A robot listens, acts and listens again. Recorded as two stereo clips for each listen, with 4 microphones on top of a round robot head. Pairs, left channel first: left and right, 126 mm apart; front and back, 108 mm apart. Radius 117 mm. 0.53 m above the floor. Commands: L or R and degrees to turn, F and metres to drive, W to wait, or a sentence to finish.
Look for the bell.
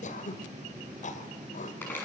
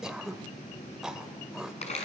W
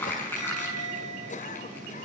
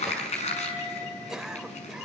R70
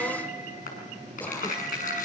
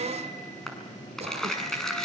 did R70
W
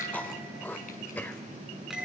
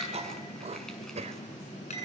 Found it: a bell, straight ahead, over 4 m away.